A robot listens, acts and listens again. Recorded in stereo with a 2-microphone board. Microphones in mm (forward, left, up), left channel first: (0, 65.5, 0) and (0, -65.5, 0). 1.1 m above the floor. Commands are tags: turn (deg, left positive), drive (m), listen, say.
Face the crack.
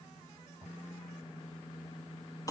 <listen/>
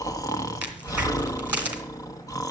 <turn deg="-30"/>
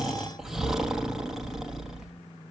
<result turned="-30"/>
<listen/>
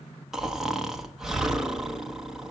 <say>I heard a crack, but can't make it out now. It was about 15° left or 135° right.</say>